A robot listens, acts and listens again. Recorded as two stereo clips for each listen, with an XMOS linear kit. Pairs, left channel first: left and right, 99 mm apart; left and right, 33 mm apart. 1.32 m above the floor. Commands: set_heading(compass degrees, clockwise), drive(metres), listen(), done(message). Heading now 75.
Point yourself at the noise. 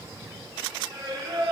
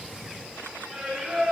set_heading(120)
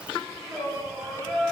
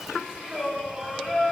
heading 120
done("Facing the singing, 1 to 2 m away.")